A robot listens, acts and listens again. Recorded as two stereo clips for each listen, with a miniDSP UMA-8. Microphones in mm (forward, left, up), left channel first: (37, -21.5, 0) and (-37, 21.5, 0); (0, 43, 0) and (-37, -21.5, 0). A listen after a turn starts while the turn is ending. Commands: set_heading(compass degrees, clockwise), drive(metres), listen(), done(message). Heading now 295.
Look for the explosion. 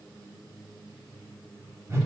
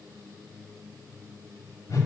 listen()
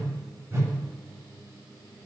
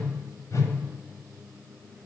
listen()
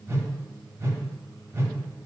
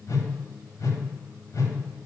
done("I can't make out an explosion to turn to.")